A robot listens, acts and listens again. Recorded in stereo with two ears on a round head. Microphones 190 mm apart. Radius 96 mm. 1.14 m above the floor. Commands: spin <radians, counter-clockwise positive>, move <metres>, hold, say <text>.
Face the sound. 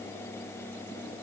hold
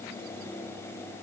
hold
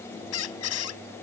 spin 1.57
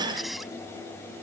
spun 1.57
say Found it: a squeak, straight ahead.